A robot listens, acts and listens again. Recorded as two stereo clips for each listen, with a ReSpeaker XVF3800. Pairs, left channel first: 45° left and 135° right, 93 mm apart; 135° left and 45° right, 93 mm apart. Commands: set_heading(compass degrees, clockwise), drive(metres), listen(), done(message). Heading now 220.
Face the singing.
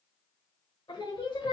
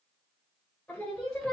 set_heading(165)
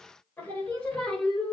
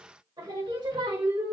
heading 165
set_heading(200)
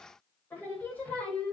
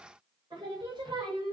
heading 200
set_heading(235)
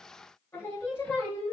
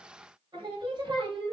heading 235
set_heading(255)
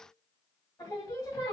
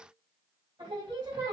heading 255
done("Facing the singing, 2 to 4 m away.")